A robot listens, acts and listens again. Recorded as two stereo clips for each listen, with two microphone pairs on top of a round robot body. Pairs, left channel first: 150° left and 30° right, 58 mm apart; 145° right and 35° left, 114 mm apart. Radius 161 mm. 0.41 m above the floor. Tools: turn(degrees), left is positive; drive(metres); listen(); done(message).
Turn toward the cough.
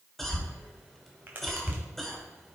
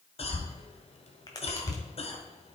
turn(degrees=-125)
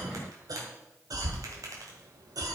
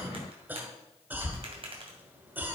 turn(degrees=-40)
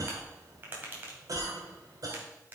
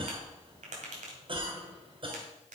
turn(degrees=-10)
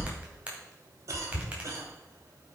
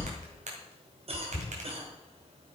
done("Found it: a cough, straight ahead, 2 to 4 m away.")